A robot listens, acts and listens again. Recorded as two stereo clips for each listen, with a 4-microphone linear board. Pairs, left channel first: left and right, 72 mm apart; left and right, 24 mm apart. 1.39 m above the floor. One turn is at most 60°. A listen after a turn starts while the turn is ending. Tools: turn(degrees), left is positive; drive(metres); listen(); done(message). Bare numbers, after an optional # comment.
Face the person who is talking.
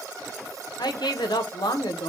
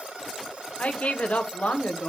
# The woman speaking: about 75° left or 105° left.
turn(60)
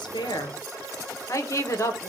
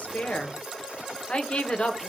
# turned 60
# So it is at 45° left.
turn(45)
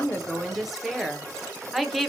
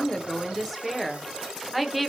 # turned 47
done("Facing the woman speaking, under 1 m away.")